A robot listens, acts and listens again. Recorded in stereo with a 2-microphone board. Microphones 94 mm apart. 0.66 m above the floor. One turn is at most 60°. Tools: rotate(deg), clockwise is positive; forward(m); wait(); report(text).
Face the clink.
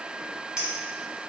rotate(30)
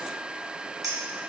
rotate(60)
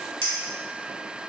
rotate(60)
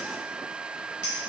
rotate(20)
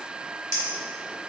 rotate(35)
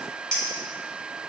rotate(-10)
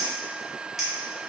report("Facing the clink.")